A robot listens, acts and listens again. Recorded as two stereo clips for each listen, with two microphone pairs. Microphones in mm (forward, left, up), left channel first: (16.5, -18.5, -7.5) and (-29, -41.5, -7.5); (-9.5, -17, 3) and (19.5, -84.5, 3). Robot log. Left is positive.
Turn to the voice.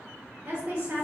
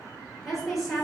note: The woman speaking: 155° right.
cmd yaw -155
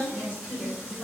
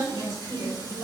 note: The woman speaking is now 35° right.
cmd yaw -35
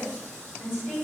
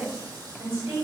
note: The woman speaking is now 15° right.
cmd yaw -15
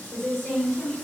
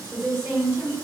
end: Found it: a woman speaking, straight ahead, 1 to 2 m away.